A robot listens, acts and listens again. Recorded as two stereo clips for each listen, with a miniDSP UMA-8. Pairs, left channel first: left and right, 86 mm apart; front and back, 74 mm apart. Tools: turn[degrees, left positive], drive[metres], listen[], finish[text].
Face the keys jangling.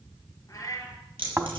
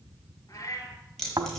Thought: The keys jangling: 80° right.
Action: turn[-80]
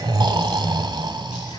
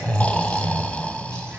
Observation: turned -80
Action: listen[]
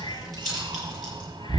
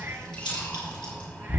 Action: finish[Found it: keys jangling, straight ahead.]